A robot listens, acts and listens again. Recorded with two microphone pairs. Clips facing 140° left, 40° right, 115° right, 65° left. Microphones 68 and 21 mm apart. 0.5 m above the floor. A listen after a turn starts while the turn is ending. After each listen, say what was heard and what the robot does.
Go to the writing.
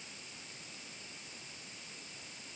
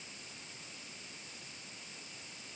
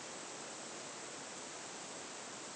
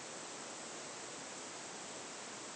Keep listening.
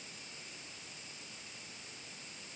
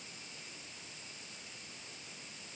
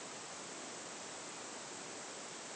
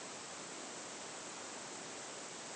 Keep listening.
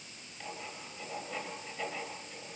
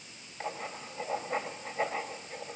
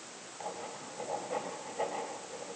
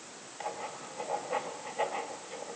Drive 1.0 m forward.
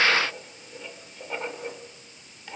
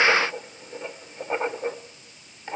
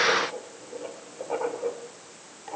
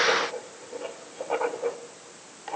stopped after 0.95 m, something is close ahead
The writing is now 10° left. Turn 10° left.
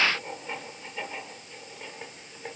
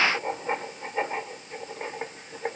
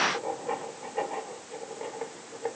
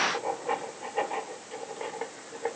I am next to the writing.